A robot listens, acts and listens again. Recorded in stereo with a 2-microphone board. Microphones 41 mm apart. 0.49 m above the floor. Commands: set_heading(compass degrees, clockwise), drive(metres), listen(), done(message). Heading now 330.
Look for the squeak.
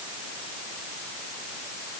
listen()
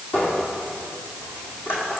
set_heading(280)
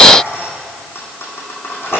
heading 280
set_heading(200)
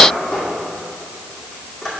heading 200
done("Facing the squeak.")